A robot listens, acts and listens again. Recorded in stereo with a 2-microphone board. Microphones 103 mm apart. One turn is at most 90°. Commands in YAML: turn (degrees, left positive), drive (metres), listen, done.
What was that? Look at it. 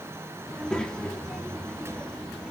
turn: 30
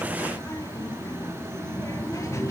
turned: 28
turn: 90
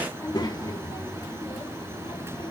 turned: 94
turn: 50
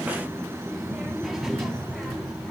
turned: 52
done: "Facing the child speaking."